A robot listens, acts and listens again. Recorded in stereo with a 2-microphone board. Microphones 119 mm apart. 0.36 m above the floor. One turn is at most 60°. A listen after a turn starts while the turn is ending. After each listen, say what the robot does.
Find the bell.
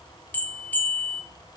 Turn 15° left.
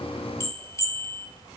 Turn 60° left.
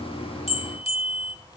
Turn 60° left.
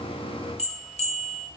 Turn 60° left.
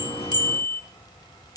Turn 35° left.
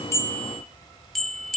Found it: a bell, straight ahead.